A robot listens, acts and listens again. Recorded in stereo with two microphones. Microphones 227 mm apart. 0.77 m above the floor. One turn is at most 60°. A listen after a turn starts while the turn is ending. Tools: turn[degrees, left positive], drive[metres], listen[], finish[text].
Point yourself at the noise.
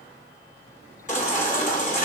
Thought: The baby crying: about 35° left or 145° left.
Action: turn[35]
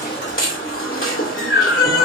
Thought: So it is at 110° left.
Action: turn[60]
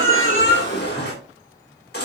Thought: The baby crying is now 50° left.
Action: turn[50]
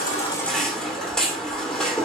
Action: finish[Found it: a baby crying, straight ahead, 2 to 4 m away.]